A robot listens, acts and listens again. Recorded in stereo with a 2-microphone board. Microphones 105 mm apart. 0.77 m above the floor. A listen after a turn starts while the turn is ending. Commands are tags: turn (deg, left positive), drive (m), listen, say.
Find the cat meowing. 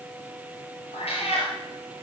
<turn deg="90"/>
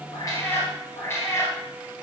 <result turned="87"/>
<turn deg="25"/>
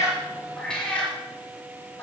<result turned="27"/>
<turn deg="15"/>
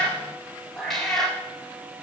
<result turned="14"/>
<say>Facing the cat meowing, over 4 m away.</say>